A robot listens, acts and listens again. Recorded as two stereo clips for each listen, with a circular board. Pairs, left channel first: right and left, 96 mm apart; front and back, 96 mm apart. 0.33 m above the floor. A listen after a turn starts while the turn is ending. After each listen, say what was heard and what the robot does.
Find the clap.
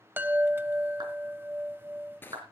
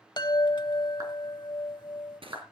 The clap: 130° left. Turn 130° left.
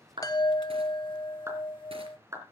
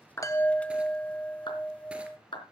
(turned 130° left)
The clap is now 30° left. Turn 30° left.
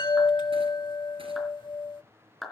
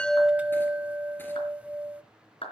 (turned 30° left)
Facing the clap.